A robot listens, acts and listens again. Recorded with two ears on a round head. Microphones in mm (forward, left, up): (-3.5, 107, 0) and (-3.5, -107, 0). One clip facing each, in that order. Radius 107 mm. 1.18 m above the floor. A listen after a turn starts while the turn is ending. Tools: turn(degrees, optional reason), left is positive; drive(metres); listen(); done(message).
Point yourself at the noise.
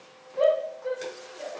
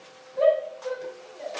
turn(degrees=20, reason="The shout: about 20° left or 160° left.")
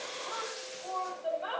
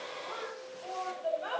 done("Found it: a shout, straight ahead.")